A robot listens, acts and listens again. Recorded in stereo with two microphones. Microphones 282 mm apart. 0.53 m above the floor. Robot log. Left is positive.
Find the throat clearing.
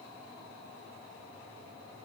cmd idle
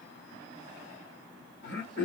note: The throat clearing: about 40° left or 140° left.
cmd yaw +40
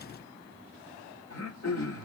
note: So it is at 95° left.
cmd yaw +95
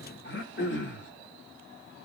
note: The throat clearing is now 50° left.
cmd yaw +50
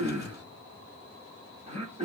note: The throat clearing is now 25° right.
cmd yaw -25
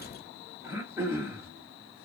note: The throat clearing is now 10° right.
cmd yaw -10
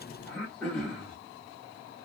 end: Found it: throat clearing, straight ahead, 1 to 2 m away.